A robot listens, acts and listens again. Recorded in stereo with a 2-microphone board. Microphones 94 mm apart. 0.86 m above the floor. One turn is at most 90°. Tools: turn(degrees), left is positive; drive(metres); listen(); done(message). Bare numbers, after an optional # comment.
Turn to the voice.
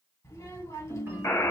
# The child speaking: about 30° left or 150° left.
turn(30)
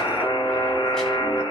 listen()
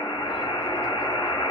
listen()
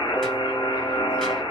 done("I heard a child speaking, but can't make it out now. It was about straight ahead or 120° left.")